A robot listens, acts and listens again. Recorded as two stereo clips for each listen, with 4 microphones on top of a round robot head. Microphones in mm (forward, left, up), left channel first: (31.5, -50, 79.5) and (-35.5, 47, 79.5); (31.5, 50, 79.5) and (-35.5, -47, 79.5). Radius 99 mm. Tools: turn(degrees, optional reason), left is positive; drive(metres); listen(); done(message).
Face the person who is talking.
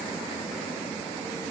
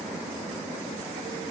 listen()
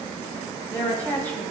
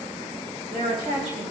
turn(degrees=-130, reason="The woman speaking: 130° right.")
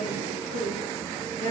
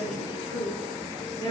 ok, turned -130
done("Found it: a woman speaking, straight ahead.")